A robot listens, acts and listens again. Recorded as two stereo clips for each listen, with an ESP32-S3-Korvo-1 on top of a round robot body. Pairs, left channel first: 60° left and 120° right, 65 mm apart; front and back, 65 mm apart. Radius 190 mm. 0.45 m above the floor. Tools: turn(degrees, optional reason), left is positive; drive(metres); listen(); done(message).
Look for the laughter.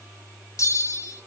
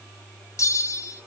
listen()
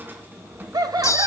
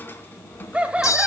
turn(degrees=-105, reason="The laughter: 105° right.")
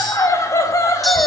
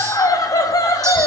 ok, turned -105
turn(degrees=25, reason="The laughter is now 25° left.")
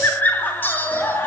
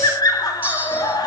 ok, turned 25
done("Facing the laughter.")